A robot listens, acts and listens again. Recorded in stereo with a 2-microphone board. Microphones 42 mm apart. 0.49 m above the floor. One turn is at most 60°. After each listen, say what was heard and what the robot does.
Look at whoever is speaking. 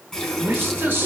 The man speaking: about 60° right or 120° right. Turn 60° right.
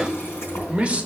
So it is at 30° right. Turn 30° right.
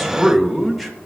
Facing the man speaking, 1 to 2 m away.